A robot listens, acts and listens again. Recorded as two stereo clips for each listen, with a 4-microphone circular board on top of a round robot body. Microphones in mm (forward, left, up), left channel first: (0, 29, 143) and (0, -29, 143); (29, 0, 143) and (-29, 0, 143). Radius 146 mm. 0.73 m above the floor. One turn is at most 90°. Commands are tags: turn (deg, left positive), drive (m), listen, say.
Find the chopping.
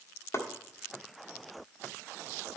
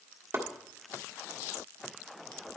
<turn deg="90"/>
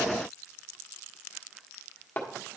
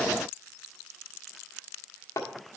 <turn deg="35"/>
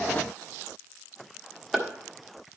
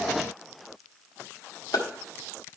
<say>Found it: chopping, straight ahead, 1 to 2 m away.</say>